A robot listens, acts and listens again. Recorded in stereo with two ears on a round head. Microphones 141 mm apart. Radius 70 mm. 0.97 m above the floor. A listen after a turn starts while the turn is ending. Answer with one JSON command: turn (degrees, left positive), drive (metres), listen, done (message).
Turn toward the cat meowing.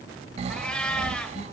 {"turn": 30}
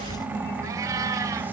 {"turn": -20}
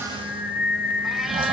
{"listen": true}
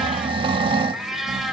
{"listen": true}
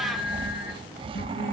{"done": "I heard a cat meowing from this way, but can't make it out now."}